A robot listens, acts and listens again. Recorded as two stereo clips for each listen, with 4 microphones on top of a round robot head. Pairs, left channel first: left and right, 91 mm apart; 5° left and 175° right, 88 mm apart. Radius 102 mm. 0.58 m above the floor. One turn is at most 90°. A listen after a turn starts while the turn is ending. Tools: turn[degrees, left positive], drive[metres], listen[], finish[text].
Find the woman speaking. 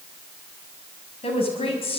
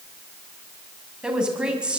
Thought: The woman speaking: 105° left.
Action: turn[90]
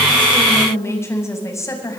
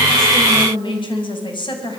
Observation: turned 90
Thought: The woman speaking is now 35° left.
Action: turn[35]
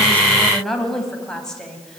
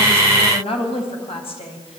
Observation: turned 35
Thought: The woman speaking is now 10° left.
Action: turn[10]
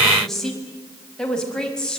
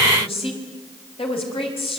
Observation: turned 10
Thought: The woman speaking is now 10° left.
Action: turn[10]
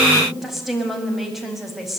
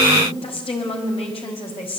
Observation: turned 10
Action: finish[Found it: a woman speaking, straight ahead.]